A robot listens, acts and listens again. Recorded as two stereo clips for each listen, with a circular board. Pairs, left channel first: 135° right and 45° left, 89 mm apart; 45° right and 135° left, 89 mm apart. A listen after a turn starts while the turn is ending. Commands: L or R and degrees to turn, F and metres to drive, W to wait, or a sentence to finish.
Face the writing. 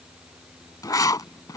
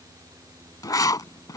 R90
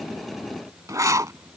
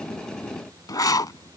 Facing the writing.